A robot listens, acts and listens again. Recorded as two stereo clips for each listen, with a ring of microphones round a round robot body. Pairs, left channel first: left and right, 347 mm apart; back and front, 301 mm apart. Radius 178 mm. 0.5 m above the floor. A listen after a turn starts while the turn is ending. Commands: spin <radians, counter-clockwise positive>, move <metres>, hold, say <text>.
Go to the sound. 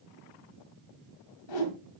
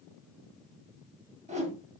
spin 1.22
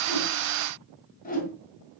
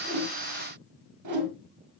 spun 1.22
spin 0.44
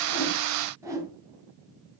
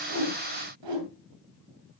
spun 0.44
spin -0.17
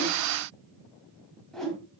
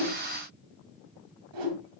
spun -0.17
move 1.0
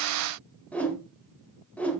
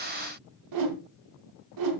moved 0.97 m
move 1.0
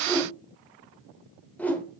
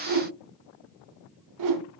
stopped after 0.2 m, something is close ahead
say I am next to the whoosh.